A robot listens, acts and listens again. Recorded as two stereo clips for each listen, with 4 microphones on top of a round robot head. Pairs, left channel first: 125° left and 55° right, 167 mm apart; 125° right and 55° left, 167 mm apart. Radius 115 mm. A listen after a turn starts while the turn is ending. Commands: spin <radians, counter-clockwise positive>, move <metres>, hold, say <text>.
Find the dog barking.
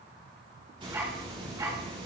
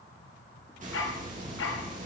spin -2.18
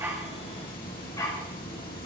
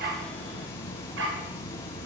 spin 0.96
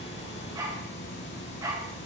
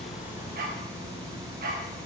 spin 0.26
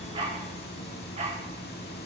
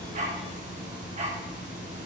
say Facing the dog barking.